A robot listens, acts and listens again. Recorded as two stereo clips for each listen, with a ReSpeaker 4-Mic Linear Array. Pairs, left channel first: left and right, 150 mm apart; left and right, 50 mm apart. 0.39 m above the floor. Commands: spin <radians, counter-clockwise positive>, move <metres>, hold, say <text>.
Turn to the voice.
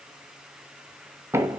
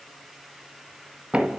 hold
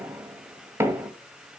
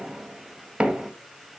hold
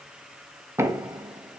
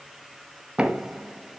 say I can't make out anyone speaking, only knocking.